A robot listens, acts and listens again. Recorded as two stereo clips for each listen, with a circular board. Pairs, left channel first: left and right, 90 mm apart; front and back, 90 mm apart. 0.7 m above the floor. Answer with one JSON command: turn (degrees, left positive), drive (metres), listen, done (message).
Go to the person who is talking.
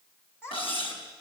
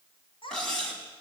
{"turn": 25}
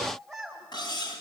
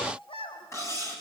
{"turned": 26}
{"drive": 1.0}
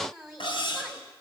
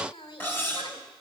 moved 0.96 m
{"drive": 1.0}
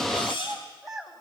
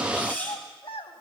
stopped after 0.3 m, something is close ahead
{"done": "Blocked. The child speaking is further on, straight ahead."}